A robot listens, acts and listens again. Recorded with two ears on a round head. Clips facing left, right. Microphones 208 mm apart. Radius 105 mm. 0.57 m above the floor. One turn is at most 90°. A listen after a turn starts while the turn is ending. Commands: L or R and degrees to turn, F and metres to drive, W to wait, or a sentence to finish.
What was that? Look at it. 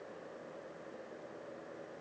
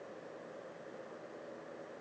W
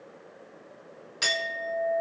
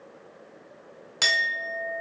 R70
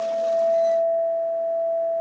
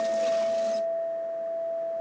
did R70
R30
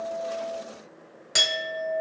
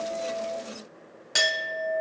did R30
Facing the clink, 1 to 2 m away.